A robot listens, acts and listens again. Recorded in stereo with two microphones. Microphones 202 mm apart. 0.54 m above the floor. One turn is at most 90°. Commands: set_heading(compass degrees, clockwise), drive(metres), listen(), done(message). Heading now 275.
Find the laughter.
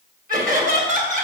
set_heading(320)
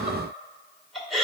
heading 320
done("Facing the laughter.")